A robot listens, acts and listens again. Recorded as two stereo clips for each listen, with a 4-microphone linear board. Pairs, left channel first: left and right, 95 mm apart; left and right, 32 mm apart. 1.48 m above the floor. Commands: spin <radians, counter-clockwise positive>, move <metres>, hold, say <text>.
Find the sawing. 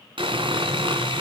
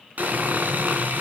spin -1.13
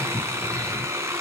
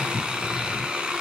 spin -0.52
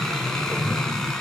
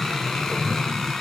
hold
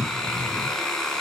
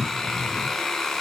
say Found it: sawing, straight ahead, 2 to 4 m away.